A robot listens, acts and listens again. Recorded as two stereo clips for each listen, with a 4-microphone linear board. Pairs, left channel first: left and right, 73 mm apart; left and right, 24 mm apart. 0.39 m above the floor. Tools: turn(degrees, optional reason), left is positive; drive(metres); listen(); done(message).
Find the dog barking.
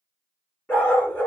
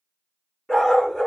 turn(degrees=25, reason="The dog barking: about 25° left or 155° left.")
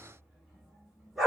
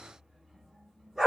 done("Found it: a dog barking, straight ahead, 1 to 2 m away.")